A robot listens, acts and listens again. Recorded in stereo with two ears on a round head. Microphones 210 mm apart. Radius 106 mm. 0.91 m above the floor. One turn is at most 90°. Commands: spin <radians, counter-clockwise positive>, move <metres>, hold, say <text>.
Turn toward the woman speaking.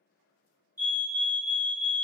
hold
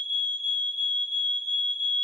hold
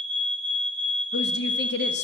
spin 0.79
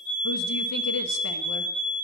hold
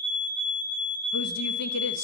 hold
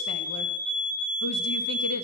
say I heard a woman speaking, but can't make it out now. It was about straight ahead or 90° left.